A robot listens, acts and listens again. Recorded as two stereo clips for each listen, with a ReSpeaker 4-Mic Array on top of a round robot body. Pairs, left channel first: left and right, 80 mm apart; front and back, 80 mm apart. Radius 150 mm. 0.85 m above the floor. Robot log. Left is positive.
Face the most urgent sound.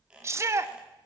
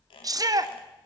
note: The shout: 145° right.
cmd yaw -145
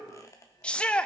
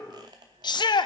note: The shout is now 15° left.
cmd yaw +15
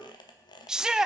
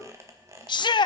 note: The shout is now 10° right.
cmd yaw -10
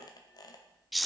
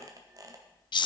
end: Found it: a shout, straight ahead, under 1 m away.